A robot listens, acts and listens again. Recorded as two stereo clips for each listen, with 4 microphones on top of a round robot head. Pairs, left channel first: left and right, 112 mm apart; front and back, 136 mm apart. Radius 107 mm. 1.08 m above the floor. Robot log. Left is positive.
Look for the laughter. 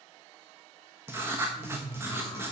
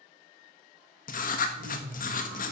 note: The laughter: 155° left.
cmd yaw +155
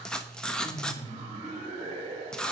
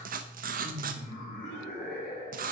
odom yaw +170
note: The laughter is now 30° right.
cmd yaw -30
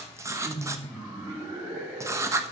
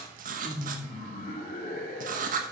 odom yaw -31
note: The laughter is now 10° right.
cmd yaw -10
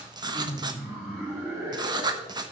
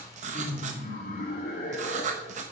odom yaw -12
end: Facing the laughter.